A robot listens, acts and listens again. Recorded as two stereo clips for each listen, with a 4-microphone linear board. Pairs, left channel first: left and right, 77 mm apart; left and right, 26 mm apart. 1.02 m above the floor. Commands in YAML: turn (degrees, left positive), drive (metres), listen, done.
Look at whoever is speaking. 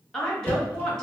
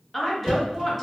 turn: 30
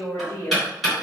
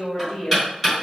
turn: 140
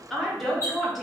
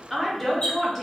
done: "Facing the woman speaking."